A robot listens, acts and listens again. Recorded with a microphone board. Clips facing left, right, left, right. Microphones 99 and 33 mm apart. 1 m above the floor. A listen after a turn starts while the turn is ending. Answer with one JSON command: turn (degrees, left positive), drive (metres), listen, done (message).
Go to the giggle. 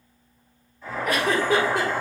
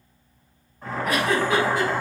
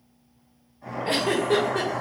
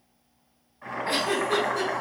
{"turn": 55}
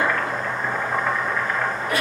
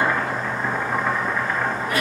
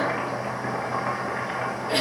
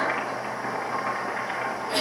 {"turn": 65}
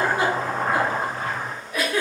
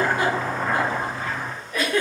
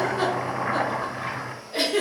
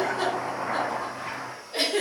{"turn": 10}
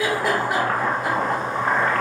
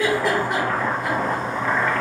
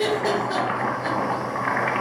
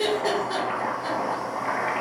{"drive": 1.0}
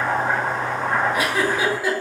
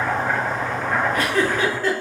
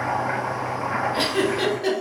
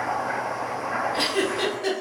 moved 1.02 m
{"turn": 10}
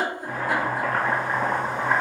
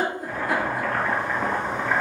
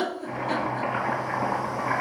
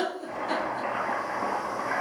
{"drive": 1.0}
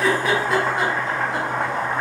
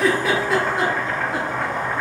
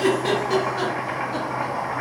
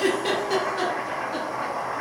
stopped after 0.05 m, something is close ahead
{"done": "I am next to the giggle."}